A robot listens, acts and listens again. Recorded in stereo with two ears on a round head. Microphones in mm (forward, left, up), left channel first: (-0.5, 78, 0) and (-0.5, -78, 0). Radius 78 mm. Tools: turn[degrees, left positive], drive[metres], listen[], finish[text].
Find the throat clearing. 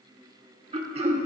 Thought: The throat clearing: about 35° right or 145° right.
Action: turn[-35]
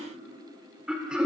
Action: finish[Found it: throat clearing, straight ahead, 1 to 2 m away.]